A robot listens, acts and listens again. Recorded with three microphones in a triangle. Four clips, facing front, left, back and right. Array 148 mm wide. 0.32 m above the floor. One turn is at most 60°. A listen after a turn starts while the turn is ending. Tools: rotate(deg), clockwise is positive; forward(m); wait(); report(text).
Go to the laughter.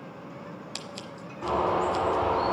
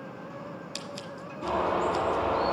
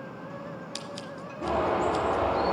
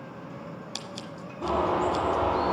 wait()
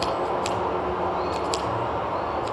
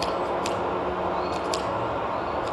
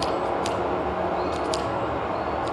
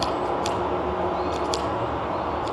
wait()
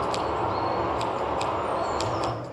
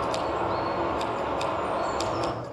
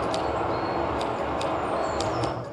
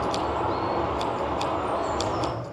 report("I can't make out laughter to turn to.")